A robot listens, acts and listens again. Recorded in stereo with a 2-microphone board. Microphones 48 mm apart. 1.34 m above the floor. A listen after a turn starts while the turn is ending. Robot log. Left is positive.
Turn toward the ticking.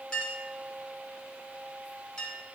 cmd idle
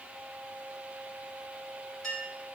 cmd idle
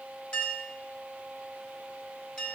end: I can't make out ticking to turn to.